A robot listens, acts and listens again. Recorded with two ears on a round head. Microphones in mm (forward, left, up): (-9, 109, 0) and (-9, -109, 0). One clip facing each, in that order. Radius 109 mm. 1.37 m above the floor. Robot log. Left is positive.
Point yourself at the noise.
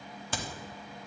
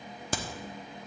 note: The crack: about 40° right or 140° right.
cmd yaw -40
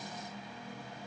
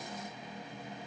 cmd idle
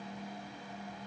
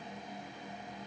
end: I heard a crack, but can't make it out now. It was about straight ahead or 100° right.